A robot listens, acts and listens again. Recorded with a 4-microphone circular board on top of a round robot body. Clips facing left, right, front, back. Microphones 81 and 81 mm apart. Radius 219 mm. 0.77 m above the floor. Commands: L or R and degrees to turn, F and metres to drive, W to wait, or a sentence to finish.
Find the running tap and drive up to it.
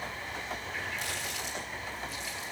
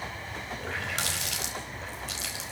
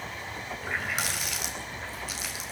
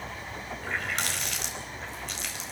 R85
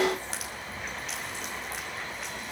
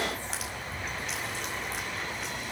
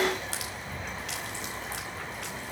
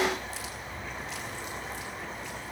W
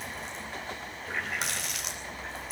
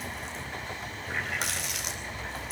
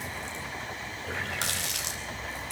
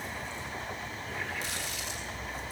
F1.0
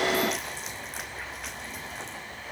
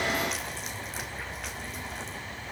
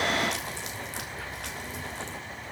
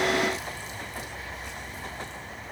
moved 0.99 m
W
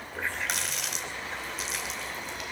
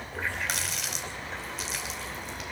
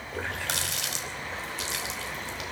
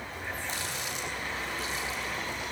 F1.0
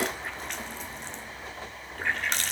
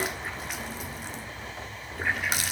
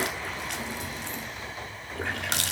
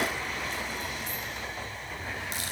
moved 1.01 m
F1.0
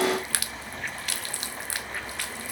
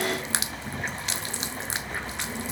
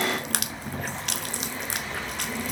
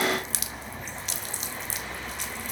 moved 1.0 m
R25
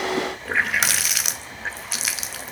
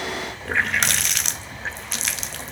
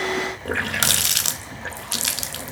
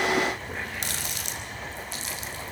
F1.0
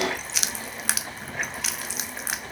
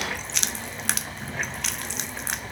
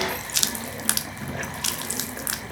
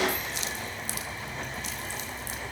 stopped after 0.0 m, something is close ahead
Arrived at the running tap, straight ahead.